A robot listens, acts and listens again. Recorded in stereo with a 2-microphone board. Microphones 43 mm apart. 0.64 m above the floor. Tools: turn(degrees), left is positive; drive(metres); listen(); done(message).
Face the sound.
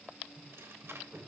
turn(degrees=-75)
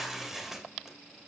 turn(degrees=-10)
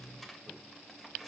done("Facing the tearing paper, 2 to 4 m away.")